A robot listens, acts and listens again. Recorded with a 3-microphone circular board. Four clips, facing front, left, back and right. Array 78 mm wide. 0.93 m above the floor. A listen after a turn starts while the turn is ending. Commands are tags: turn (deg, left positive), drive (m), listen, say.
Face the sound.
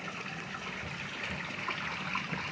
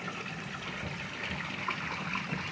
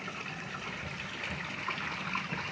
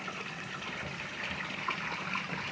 <listen/>
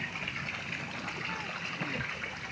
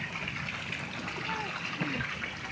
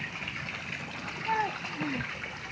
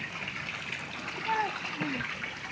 <turn deg="-150"/>
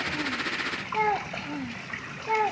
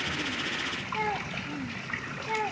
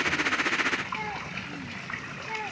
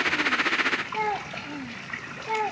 <turn deg="-25"/>
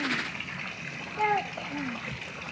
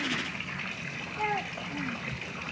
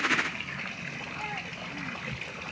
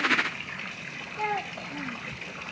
<turn deg="-15"/>
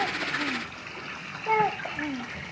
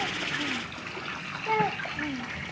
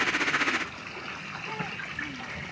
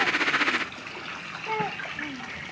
<say>Found it: a child speaking, straight ahead.</say>